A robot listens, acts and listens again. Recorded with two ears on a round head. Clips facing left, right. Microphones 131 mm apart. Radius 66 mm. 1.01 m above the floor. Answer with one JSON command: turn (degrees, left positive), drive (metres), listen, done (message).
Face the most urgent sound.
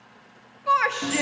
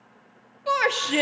{"turn": -35}
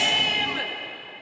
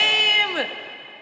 {"turn": -115}
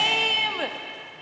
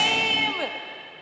{"done": "Facing the shout."}